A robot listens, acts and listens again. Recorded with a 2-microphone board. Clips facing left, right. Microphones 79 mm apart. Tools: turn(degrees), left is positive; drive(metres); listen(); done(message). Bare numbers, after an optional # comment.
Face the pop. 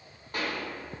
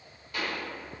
# The pop: about 45° left or 135° left.
turn(45)
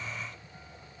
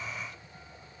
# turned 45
listen()
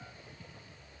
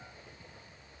done("I heard a pop, but can't make it out now. It was about straight ahead or 90° left.")